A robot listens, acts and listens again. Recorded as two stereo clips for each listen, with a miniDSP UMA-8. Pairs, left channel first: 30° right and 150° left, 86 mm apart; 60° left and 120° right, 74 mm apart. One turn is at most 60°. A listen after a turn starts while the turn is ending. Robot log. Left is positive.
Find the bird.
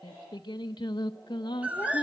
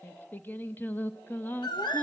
note: The bird: 75° left.
cmd yaw +60
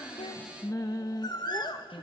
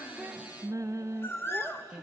end: Facing the bird.